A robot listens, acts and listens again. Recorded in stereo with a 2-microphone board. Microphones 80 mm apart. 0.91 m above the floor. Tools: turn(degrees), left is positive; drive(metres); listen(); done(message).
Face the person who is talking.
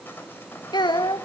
turn(degrees=65)
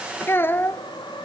turn(degrees=30)
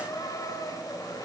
listen()
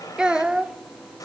turn(degrees=-10)
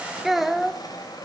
done("Found it: a child speaking, straight ahead.")